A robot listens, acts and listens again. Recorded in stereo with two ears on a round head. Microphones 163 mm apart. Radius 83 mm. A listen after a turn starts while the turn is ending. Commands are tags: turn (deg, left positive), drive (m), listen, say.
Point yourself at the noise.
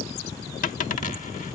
<turn deg="45"/>
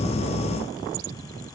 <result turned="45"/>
<listen/>
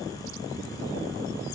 <say>I heard a dropped coin, but can't make it out now. It was about straight ahead or 90° left.</say>